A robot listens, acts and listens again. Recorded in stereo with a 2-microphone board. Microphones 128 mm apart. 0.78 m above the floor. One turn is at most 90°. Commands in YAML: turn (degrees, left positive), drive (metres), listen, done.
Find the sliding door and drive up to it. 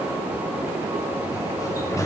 turn: 25
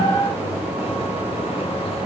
turn: 90
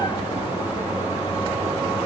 turn: 40
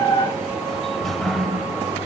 drive: 1.0
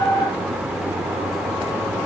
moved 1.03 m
drive: 1.0
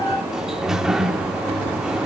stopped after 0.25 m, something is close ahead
done: "I am next to the sliding door."